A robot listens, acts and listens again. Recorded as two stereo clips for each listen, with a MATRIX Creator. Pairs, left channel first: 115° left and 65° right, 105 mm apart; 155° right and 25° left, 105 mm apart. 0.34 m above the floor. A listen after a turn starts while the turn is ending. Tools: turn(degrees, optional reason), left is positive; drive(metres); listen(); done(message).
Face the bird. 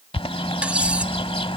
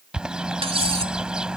turn(degrees=105, reason="The bird: 105° left.")
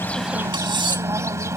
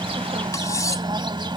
turn(degrees=-10, reason="The bird is now 10° right.")
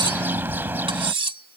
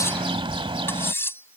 done("Facing the bird.")